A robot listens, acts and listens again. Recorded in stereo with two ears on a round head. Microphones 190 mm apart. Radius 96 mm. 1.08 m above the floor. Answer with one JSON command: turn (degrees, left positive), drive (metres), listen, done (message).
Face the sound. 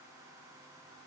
{"listen": true}
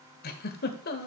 {"turn": 45}
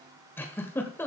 {"turn": 10}
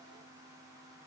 {"listen": true}
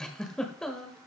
{"done": "Facing the giggle, 1 to 2 m away."}